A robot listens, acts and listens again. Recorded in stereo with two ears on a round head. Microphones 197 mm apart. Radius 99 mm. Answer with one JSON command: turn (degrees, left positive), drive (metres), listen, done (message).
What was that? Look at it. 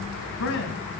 {"turn": 60}
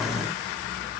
{"listen": true}
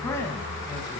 {"turn": 15}
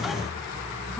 {"listen": true}
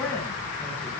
{"done": "Facing the man speaking, over 4 m away."}